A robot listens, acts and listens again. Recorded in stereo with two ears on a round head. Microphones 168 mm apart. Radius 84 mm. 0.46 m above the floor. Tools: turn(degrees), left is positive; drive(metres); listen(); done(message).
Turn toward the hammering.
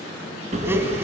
turn(degrees=-40)
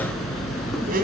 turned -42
done("Facing the hammering.")